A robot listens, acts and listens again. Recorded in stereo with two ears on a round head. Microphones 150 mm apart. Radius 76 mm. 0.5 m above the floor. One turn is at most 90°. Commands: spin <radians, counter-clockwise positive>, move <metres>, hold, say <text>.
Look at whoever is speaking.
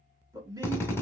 spin -0.35
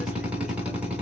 hold
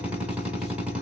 hold
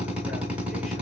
say I heard a man speaking, but can't make it out now. It was about straight ahead or 140° right.